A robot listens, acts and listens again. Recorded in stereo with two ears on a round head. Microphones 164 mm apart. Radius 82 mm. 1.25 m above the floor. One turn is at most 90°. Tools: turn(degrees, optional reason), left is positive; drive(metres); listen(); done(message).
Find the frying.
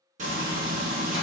turn(degrees=-40, reason="The frying: about 40° right or 140° right.")
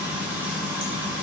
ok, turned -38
turn(degrees=-10, reason="So it is at 10° right.")
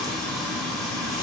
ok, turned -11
done("Facing the frying.")